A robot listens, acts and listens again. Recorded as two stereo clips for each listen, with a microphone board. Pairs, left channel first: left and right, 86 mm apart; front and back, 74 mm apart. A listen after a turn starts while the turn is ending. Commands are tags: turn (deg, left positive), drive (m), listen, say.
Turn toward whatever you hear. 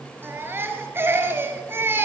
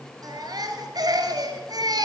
<turn deg="-155"/>
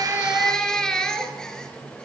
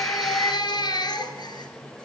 <say>Found it: a baby crying, straight ahead, 2 to 4 m away.</say>